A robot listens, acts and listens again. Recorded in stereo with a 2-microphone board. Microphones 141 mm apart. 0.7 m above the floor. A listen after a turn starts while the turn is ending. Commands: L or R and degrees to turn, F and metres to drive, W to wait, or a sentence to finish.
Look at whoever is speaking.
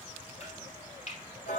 W
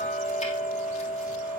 W
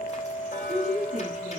R55
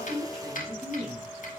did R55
Facing the woman speaking, over 4 m away.